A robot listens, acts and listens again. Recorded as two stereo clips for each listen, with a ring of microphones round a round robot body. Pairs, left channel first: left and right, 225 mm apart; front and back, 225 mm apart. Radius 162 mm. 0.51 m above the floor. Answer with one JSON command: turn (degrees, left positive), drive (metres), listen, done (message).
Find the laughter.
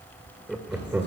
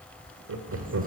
{"turn": -170}
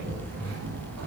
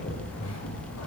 {"listen": true}
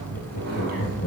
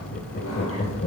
{"turn": 40}
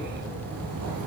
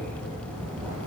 {"listen": true}
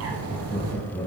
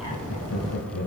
{"turn": 15}
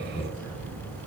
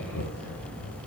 {"done": "Found it: laughter, straight ahead, 2 to 4 m away."}